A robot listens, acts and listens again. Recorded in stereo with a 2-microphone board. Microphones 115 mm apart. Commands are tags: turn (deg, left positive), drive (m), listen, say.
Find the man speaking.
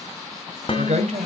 <turn deg="-65"/>
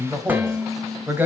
<turn deg="-15"/>
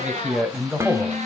<turn deg="-10"/>
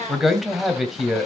<say>Facing the man speaking, 2 to 4 m away.</say>